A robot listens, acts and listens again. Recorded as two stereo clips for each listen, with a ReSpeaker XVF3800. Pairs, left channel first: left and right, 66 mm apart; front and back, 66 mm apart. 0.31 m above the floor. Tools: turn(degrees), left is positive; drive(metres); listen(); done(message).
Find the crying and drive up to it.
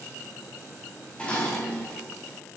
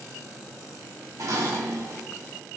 listen()
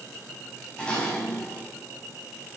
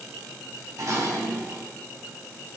listen()
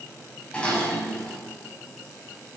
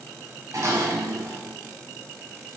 done("I can't make out crying to turn to.")